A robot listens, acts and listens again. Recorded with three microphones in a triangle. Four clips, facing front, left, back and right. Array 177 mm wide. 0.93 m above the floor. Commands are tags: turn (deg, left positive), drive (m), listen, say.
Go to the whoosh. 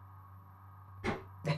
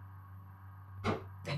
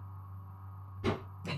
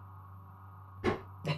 <turn deg="-100"/>
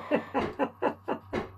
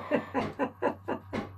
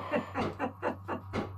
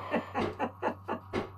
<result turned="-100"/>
<turn deg="-35"/>
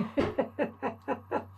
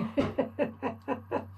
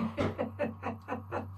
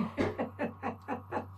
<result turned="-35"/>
<turn deg="-20"/>
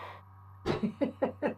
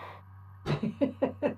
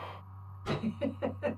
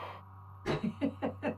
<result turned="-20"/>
<drive m="1.0"/>
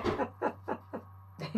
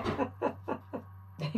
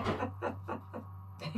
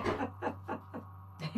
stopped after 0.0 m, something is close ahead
<say>Blocked. The whoosh is further on, straight ahead.</say>